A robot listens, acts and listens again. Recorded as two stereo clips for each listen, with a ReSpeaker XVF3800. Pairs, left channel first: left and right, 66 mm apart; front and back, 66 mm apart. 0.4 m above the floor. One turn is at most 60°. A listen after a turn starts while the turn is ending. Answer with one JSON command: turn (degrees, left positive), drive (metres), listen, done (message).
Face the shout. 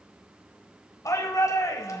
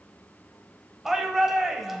{"turn": 60}
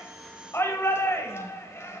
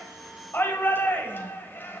{"turn": 50}
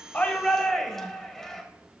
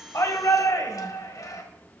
{"done": "Facing the shout."}